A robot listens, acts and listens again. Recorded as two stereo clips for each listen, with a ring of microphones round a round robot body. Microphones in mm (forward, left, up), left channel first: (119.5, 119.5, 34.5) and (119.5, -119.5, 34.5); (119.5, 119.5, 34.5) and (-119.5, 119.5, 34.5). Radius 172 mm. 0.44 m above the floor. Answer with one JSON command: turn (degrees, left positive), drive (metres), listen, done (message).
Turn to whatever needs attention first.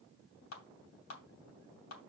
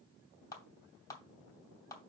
{"listen": true}
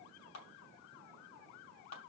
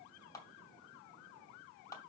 {"listen": true}
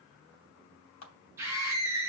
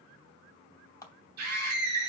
{"turn": -170}
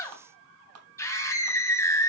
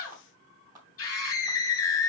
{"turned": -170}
{"turn": 15}
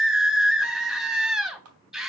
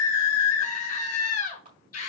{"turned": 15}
{"done": "Found it: a scream, straight ahead."}